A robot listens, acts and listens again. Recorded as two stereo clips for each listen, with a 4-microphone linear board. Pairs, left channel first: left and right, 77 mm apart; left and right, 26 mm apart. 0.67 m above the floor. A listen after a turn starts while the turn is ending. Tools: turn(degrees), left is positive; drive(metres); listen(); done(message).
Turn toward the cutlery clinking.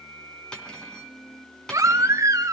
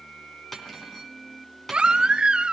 turn(degrees=30)
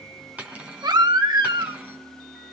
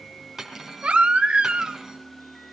turn(degrees=-15)
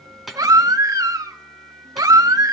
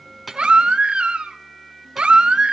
done("Facing the cutlery clinking, 2 to 4 m away.")